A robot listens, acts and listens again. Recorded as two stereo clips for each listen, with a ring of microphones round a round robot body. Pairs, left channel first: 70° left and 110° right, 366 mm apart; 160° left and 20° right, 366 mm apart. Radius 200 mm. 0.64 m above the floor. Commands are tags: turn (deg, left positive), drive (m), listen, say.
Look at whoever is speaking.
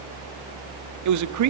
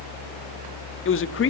<turn deg="-150"/>
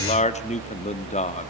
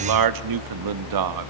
<say>Facing the man speaking, 1 to 2 m away.</say>